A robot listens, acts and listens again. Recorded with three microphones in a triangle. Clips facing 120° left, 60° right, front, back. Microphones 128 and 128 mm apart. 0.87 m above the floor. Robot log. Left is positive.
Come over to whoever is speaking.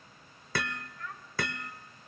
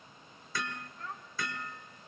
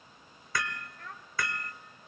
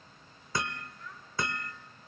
cmd fwd 1.0
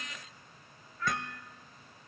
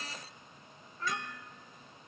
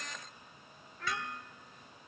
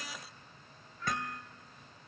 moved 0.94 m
cmd fwd 1.0
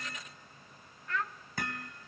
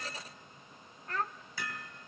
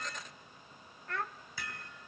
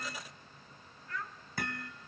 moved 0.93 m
note: The child speaking is now 10° right.
cmd yaw -10
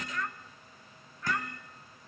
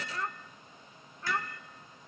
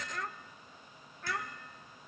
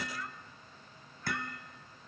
cmd fwd 1.0
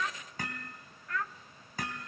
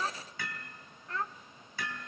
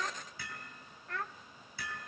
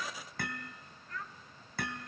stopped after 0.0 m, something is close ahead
end: I am next to the child speaking.